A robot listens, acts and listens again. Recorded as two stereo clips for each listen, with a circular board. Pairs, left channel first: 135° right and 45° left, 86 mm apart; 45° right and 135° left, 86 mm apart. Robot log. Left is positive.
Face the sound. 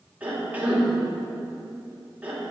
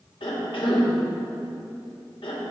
note: The cough: 30° right.
cmd yaw -30
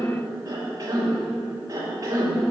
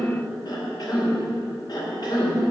end: Found it: a cough, straight ahead, 2 to 4 m away.